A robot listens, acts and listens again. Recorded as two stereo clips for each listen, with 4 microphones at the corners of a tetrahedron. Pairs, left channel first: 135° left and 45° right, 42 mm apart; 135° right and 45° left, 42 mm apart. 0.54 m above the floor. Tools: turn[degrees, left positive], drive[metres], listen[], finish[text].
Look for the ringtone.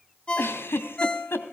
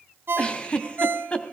Thought: The ringtone: 70° left.
Action: turn[70]
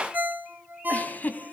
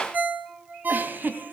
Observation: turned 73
Action: finish[Facing the ringtone.]